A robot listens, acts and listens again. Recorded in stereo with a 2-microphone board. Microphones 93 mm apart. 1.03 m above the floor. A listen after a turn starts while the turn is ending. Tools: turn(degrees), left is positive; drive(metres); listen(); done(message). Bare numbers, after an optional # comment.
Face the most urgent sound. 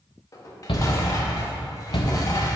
# The shout: about 70° left or 110° left.
turn(70)
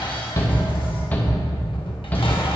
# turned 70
# So it is at 20° left.
turn(20)
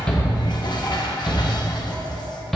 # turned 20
done("Found it: a shout, straight ahead.")